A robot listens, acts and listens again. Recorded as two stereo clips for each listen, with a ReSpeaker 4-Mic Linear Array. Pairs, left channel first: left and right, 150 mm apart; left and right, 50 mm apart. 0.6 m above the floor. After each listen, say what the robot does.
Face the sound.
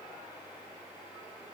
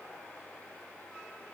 Keep listening.
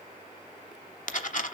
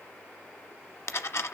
Turn 60° left.
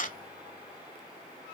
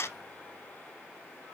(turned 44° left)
Turn 70° left.
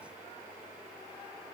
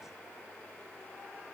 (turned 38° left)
Turn 30° left.
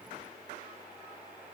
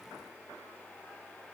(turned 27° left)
Facing where the dropped coin came from. I can't hear it now.